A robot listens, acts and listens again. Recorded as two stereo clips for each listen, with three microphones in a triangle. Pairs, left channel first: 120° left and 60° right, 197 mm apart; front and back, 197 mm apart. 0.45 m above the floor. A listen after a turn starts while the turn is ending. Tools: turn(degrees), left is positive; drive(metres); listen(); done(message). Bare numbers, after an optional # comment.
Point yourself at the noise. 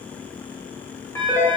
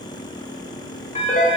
# The phone ringing: 45° left.
turn(45)
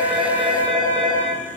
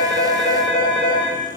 done("Found it: a phone ringing, straight ahead, 1 to 2 m away.")